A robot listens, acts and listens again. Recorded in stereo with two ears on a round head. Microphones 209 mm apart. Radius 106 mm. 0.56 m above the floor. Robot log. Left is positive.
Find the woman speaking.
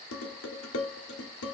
cmd idle
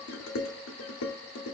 cmd idle
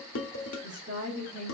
note: The woman speaking: about 30° right or 150° right.
cmd yaw -30
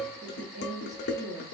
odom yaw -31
note: The woman speaking: about 30° right or 150° right.
cmd yaw -30
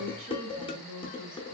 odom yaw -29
note: So it is at 135° right.
cmd yaw -135
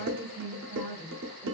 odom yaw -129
note: The woman speaking is now 10° left.
cmd yaw +10
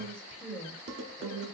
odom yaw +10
end: Found it: a woman speaking, straight ahead.